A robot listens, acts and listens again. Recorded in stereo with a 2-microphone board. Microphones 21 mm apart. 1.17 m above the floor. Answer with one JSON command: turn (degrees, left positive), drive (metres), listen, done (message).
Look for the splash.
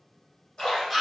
{"turn": 30}
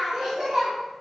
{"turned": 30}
{"listen": true}
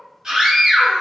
{"done": "I heard a splash, but can't make it out now. It was about straight ahead or 120° left."}